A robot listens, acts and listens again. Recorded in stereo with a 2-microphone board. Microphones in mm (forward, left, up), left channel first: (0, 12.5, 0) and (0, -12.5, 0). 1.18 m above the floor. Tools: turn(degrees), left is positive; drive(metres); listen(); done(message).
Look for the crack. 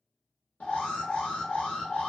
listen()
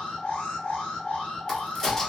turn(degrees=20)
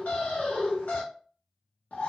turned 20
listen()
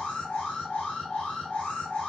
done("I heard a crack, but can't make it out now. It was about straight ahead or 140° left.")